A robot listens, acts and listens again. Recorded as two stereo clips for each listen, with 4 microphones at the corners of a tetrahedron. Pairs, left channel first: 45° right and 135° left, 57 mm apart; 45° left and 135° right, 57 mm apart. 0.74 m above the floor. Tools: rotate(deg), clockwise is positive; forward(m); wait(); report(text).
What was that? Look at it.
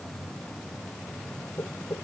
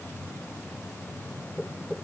rotate(20)
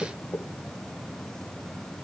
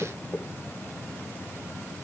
report("Found it: knocking, straight ahead.")